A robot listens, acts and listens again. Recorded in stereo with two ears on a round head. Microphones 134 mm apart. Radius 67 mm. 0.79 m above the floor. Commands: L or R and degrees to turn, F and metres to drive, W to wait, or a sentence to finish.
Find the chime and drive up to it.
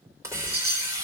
R90
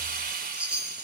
R10
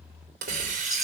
W
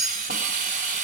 F1.0
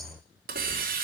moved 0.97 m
W
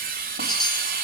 W
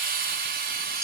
Facing where the chime came from. I can't hear it now. I did not reach it.